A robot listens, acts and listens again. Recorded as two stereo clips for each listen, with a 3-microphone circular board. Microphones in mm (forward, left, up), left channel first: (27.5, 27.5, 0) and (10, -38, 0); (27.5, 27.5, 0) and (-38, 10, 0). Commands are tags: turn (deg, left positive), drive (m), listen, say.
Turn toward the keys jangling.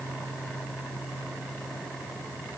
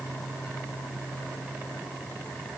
<listen/>
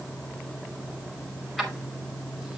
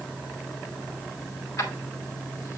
<turn deg="-15"/>
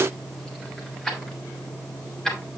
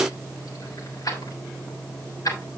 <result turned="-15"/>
<turn deg="-10"/>
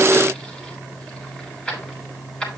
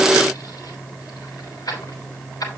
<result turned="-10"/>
<say>Facing the keys jangling.</say>